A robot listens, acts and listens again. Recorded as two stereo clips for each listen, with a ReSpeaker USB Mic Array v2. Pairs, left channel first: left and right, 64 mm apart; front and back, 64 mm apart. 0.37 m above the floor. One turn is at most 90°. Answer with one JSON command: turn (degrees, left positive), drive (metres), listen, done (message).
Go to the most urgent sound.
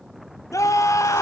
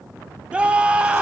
{"turn": 90}
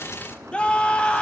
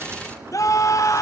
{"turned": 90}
{"turn": 20}
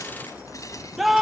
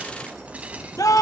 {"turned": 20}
{"drive": 1.0}
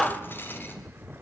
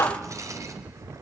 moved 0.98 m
{"drive": 1.0}
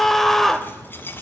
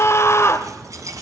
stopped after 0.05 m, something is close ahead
{"turn": 10}
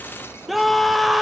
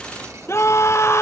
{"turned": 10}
{"done": "I am next to the scream."}